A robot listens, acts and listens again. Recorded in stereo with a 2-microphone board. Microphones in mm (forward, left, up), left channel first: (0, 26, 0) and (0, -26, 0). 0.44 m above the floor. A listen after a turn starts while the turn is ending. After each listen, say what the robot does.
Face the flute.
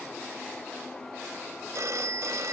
Keep listening.
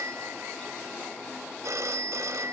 Keep listening.
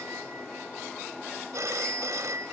I can't make out a flute to turn to.